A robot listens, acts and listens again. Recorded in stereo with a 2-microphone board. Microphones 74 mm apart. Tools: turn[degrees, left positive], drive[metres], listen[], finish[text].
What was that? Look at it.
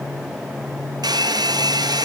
Thought: The hair dryer: about 70° right or 110° right.
Action: turn[-70]
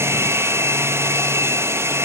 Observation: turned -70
Thought: So it is at 40° right.
Action: turn[-40]
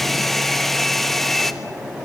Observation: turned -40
Action: finish[Facing the hair dryer, 1 to 2 m away.]